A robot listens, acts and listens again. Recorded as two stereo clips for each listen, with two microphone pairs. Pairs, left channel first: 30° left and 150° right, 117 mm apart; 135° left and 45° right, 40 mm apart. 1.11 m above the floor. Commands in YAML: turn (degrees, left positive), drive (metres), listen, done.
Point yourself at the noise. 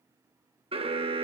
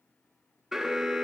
turn: -120
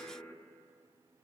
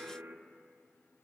turn: -35
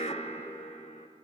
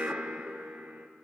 turn: 15
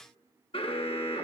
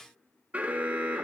done: "Found it: an alarm, straight ahead, under 1 m away."